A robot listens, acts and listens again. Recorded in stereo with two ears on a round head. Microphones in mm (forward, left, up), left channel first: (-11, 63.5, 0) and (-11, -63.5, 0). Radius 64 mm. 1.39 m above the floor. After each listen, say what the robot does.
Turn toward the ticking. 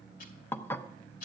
Turn 65° left.
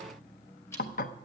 Turn 20° left.
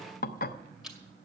Facing the ticking.